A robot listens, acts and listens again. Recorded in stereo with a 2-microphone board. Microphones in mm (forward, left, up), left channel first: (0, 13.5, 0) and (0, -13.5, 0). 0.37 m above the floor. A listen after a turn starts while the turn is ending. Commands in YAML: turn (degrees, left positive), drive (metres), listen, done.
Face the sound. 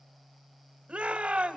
turn: -45
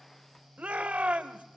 turn: -80
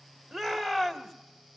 done: "Facing the shout."